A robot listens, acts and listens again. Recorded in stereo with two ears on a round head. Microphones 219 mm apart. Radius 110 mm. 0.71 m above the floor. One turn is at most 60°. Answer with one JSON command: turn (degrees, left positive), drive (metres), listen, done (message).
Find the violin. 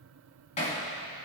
{"listen": true}
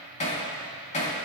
{"listen": true}
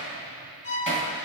{"turn": 35}
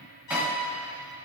{"turn": 60}
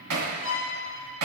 {"turn": 40}
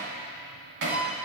{"done": "Found it: a violin, straight ahead, 2 to 4 m away."}